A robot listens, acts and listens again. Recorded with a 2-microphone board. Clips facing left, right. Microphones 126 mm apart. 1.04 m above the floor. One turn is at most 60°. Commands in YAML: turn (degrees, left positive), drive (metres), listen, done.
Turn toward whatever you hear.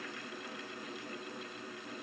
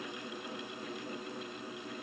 listen: true
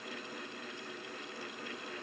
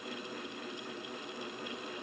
listen: true
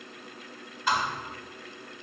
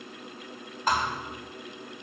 turn: -45
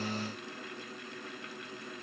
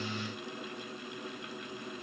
listen: true
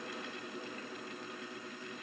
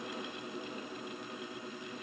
done: "I heard a thud, but can't make it out now. It was about straight ahead or 90° right."